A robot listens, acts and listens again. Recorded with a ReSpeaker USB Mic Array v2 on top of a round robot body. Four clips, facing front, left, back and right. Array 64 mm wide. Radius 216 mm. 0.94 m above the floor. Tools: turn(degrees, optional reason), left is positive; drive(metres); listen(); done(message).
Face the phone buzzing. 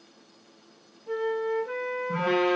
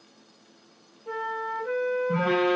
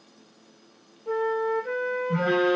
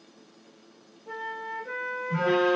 turn(degrees=65, reason="The phone buzzing: 65° left.")
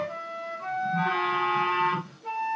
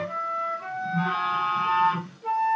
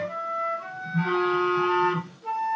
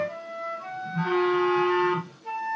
turn(degrees=10, reason="The phone buzzing is now 10° left.")
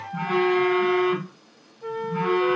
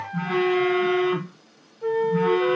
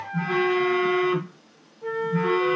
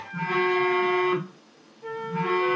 done("Facing the phone buzzing.")